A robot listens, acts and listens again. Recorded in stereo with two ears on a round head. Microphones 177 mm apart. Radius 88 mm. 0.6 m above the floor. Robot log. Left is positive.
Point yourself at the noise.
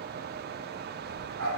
cmd yaw -90
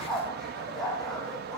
end: Facing the dog barking.